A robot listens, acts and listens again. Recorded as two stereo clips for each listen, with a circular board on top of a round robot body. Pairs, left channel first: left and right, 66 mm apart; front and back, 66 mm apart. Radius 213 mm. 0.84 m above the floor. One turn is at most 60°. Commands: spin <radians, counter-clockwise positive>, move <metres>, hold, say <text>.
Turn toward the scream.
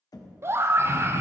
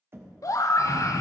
spin -0.61
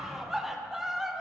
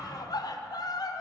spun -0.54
say Facing the scream.